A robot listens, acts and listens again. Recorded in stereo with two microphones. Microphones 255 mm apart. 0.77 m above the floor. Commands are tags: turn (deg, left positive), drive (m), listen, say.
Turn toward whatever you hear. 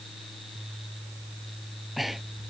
<turn deg="30"/>
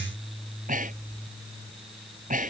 <turn deg="-30"/>
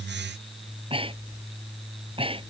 <turn deg="-20"/>
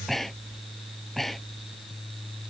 <say>Facing the breathing.</say>